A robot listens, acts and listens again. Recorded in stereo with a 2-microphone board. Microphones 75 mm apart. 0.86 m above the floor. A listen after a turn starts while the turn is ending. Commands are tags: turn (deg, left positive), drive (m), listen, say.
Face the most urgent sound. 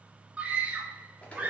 <turn deg="-20"/>
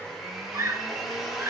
<turn deg="-140"/>
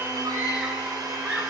<turn deg="-20"/>
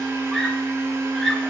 <say>Found it: a scream, straight ahead, 1 to 2 m away.</say>